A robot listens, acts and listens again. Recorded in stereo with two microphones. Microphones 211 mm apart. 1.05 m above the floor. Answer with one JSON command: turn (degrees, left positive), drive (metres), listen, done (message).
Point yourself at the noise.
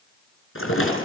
{"turn": 90}
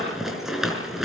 {"done": "Found it: a rattle, straight ahead, over 4 m away."}